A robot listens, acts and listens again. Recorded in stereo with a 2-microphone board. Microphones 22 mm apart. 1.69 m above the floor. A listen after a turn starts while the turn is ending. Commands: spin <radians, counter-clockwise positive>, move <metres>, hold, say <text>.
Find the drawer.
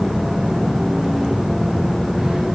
hold
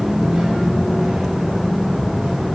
hold
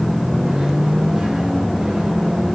say I can't make out a drawer to turn to.